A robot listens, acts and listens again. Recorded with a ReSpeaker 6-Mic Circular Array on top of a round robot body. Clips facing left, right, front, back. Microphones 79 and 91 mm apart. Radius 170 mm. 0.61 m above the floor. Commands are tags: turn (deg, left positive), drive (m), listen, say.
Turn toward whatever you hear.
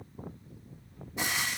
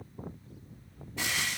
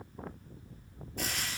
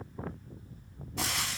<turn deg="165"/>
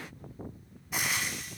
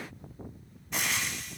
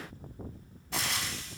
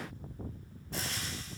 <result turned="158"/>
<say>Found it: frying, straight ahead, under 1 m away.</say>